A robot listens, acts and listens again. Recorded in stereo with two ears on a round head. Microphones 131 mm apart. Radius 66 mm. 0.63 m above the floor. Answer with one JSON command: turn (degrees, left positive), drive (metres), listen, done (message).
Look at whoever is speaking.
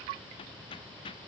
{"listen": true}
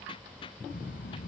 {"turn": 65}
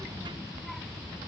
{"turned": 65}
{"done": "Found it: a child speaking, straight ahead."}